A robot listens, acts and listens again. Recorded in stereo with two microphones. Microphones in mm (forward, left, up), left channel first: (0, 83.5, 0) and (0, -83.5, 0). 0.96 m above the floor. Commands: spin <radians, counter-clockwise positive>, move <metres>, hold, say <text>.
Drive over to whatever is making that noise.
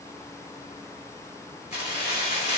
spin 0.70
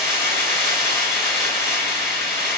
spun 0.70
move 1.0
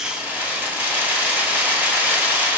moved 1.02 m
spin -0.17
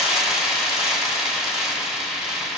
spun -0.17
move 1.0
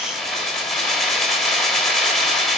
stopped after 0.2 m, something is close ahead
say Arrived at the keys jangling, straight ahead.